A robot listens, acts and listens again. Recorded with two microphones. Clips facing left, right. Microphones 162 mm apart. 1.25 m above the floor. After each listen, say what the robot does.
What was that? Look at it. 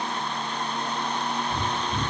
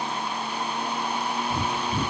Turn 20° right.
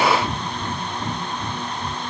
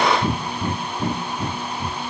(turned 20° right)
Turn 140° right.
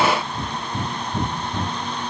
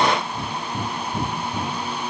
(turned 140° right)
Facing the breathing, 1 to 2 m away.